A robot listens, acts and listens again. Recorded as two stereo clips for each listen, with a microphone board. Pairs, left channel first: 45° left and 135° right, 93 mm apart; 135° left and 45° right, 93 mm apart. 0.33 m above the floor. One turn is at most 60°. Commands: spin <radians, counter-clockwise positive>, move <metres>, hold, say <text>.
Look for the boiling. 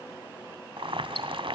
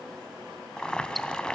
spin -1.05
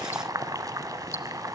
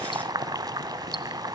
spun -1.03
spin -1.05
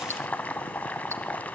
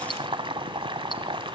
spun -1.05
spin -0.52
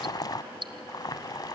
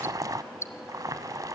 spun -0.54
say Facing the boiling.